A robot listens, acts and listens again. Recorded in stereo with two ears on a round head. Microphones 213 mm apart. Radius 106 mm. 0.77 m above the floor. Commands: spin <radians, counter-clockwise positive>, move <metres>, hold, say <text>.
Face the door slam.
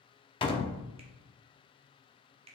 spin 0.35
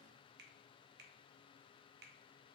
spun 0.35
hold
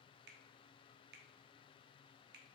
say I heard a door slam, but can't make it out now. It was about straight ahead or 140° left.